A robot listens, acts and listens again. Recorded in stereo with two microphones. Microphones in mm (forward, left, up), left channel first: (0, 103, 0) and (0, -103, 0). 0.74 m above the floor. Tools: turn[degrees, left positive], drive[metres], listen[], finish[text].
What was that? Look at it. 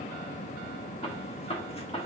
Thought: The gunshot: about 30° left or 150° left.
Action: turn[30]
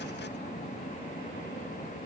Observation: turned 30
Action: listen[]
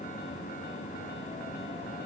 Action: finish[I heard a gunshot, but can't make it out now. It was about straight ahead or 120° left.]